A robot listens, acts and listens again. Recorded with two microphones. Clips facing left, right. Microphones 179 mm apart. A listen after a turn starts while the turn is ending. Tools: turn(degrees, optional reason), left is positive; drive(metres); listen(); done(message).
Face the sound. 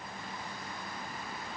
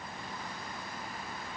listen()
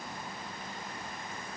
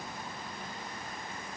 listen()
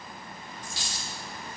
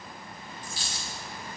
turn(degrees=90)
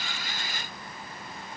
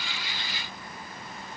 done("Facing where the dropped coin came from. I can't hear it now.")